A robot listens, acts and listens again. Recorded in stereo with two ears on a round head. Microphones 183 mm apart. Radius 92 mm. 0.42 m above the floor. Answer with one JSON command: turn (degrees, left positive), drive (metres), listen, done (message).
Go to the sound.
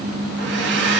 {"turn": -60}
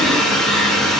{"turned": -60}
{"drive": 1.0}
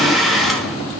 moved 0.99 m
{"drive": 1.0}
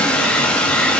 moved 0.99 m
{"drive": 1.0}
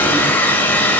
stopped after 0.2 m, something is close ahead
{"turn": 10}
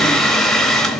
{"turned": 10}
{"done": "I am next to the hair dryer."}